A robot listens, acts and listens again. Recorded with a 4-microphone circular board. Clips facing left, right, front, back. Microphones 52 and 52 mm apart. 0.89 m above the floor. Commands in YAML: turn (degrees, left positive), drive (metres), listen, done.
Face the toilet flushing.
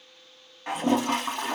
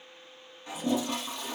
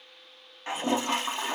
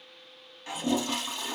turn: 55
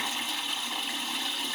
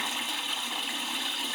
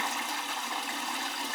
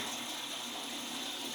done: "Found it: a toilet flushing, straight ahead, under 1 m away."